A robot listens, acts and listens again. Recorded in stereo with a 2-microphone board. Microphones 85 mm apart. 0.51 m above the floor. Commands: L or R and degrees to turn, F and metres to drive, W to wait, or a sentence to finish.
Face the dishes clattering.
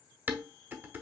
R25
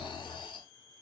W
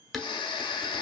Found it: dishes clattering, straight ahead, 1 to 2 m away.